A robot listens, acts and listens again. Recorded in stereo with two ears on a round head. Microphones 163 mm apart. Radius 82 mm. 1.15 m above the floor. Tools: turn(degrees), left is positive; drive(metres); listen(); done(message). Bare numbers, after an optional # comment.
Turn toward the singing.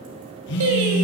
turn(-90)
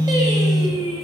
# So it is at 30° right.
turn(-30)
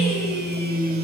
listen()
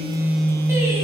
listen()
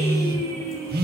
# The singing is now 20° right.
turn(-20)
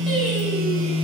listen()
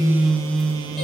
listen()
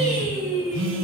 done("Facing the singing, over 4 m away.")